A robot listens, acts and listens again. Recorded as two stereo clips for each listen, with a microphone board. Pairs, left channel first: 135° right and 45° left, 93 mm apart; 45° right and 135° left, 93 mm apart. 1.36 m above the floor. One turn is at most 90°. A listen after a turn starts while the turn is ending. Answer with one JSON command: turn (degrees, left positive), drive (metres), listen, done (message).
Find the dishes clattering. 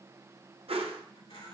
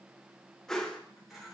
{"listen": true}
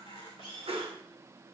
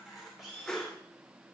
{"listen": true}
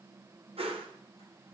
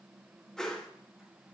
{"done": "I can't make out dishes clattering to turn to."}